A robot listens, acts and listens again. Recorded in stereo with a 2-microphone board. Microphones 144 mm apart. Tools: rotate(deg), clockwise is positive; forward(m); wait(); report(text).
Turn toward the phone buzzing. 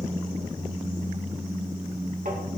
wait()
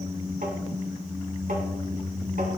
wait()
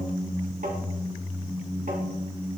report("I can't make out a phone buzzing to turn to.")